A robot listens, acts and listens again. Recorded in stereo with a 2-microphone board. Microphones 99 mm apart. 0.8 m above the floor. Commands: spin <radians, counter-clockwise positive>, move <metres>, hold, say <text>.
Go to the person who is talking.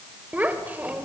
spin -0.26
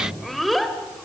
move 1.0
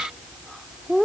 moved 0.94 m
move 1.0
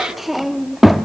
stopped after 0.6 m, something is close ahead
say I am next to the child speaking.